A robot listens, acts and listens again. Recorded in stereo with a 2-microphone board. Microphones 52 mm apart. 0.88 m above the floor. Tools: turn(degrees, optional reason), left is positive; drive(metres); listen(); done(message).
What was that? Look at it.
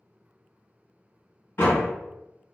turn(degrees=50, reason="The door slam: about 50° left or 130° left.")
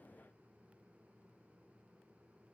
listen()
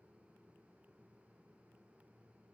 done("I heard a door slam, but can't make it out now. It was about straight ahead or 80° left.")